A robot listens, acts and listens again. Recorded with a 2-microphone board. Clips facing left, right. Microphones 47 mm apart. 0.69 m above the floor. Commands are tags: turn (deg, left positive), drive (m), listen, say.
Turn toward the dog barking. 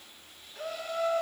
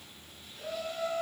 <listen/>
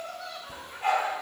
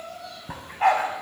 <turn deg="-90"/>
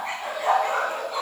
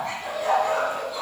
<turn deg="40"/>
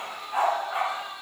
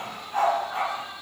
<turn deg="20"/>
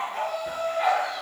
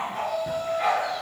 <say>Found it: a dog barking, straight ahead.</say>